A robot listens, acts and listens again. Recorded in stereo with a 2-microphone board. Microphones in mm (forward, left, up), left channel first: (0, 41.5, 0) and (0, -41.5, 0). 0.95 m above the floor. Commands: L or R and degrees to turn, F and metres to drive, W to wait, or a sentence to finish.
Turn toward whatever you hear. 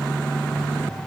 W
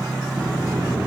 R35
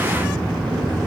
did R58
R85
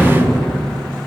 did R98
L10
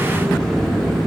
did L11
Facing the sliding door, 1 to 2 m away.